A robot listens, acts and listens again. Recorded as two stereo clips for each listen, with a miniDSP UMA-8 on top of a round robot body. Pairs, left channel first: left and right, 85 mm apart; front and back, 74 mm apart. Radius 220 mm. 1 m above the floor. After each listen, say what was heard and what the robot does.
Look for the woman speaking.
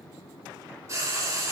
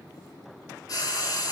Keep listening.
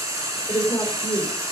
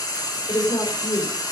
The woman speaking: 15° left. Turn 15° left.
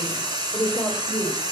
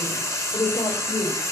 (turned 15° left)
Facing the woman speaking.